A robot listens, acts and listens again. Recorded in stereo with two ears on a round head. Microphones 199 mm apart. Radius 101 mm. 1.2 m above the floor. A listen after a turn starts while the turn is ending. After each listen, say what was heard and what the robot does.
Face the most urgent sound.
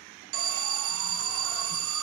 The alarm: about 65° right or 115° right. Turn 65° right.
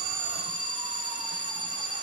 So it is at 25° right. Turn 25° right.
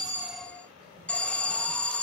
Found it: an alarm, straight ahead.